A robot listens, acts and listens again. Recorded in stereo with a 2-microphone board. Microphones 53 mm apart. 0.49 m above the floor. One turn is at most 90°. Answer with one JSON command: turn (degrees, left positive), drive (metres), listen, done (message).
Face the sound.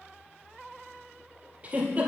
{"turn": -25}
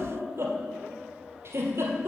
{"turn": -90}
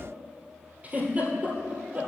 {"turn": -30}
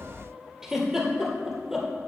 {"turn": -10}
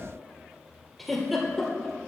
{"done": "Found it: a giggle, straight ahead, 1 to 2 m away."}